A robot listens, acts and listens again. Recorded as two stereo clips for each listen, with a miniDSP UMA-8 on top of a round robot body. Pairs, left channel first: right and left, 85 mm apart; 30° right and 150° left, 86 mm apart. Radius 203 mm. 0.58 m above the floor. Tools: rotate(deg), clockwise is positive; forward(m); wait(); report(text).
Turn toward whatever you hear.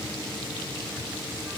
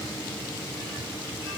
wait()
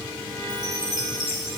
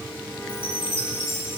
rotate(40)
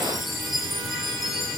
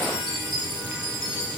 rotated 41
report("Facing the chime, 2 to 4 m away.")